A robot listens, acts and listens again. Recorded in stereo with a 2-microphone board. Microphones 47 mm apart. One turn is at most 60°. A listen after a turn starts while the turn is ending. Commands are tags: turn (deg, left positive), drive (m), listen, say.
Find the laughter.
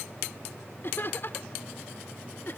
<turn deg="45"/>
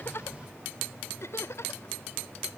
<turn deg="60"/>
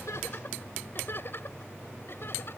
<turn deg="55"/>
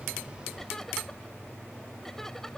<listen/>
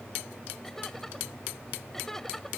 <turn deg="10"/>
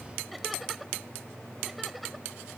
<say>Facing the laughter.</say>